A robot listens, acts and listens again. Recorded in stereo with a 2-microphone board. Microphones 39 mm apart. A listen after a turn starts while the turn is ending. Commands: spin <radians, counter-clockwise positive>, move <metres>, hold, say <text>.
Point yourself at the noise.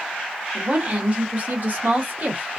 spin -0.79
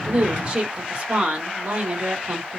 spin -0.70
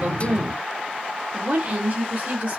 spin -0.79
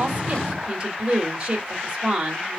spin -0.26
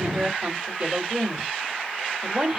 say Facing the woman speaking.